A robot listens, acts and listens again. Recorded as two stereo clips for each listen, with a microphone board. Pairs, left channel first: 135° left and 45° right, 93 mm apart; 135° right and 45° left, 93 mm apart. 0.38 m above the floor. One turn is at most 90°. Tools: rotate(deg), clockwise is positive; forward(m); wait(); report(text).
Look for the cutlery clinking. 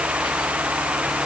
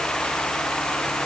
wait()
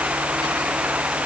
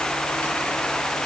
wait()
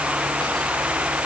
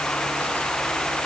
report("I can't make out cutlery clinking.")